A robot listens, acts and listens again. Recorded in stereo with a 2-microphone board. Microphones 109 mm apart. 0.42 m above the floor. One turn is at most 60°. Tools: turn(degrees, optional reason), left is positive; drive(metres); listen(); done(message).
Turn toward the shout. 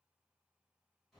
listen()
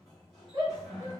turn(degrees=-40, reason="The shout: about 40° right or 140° right.")
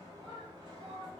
turn(degrees=-60, reason="So it is at 95° right.")
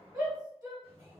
turn(degrees=-40, reason="The shout is now 40° right.")
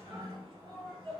done("Found it: a shout, straight ahead, 1 to 2 m away.")